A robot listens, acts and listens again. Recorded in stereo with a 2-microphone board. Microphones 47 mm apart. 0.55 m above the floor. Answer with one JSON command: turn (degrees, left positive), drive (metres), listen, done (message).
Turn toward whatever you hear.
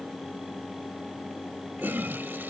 {"turn": -50}
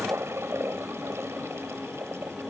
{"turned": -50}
{"turn": -80}
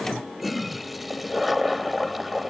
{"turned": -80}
{"done": "Facing the toilet flushing."}